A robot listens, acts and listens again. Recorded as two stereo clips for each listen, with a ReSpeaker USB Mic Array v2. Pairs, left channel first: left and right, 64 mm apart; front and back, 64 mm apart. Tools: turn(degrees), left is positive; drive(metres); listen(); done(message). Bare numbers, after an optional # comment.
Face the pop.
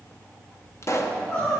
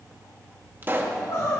# The pop: 125° left.
turn(125)
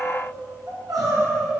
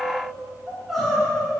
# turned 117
# Nothing new. It was at 10° left.
turn(10)
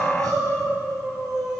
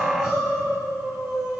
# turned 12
done("Facing where the pop came from. I can't hear it now.")